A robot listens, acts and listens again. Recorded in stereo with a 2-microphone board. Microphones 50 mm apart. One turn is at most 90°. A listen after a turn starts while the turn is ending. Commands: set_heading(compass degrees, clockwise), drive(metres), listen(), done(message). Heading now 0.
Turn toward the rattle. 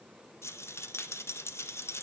set_heading(305)
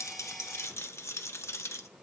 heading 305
set_heading(240)
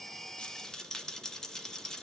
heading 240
set_heading(225)
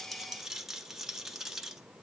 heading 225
done("Found it: a rattle, straight ahead.")